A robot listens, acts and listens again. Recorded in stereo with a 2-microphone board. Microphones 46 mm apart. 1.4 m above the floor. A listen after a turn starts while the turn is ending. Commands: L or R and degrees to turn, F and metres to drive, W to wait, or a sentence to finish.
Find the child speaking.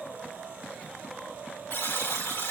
W
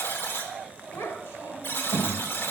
L90
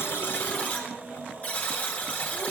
W
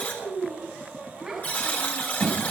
Found it: a child speaking, straight ahead.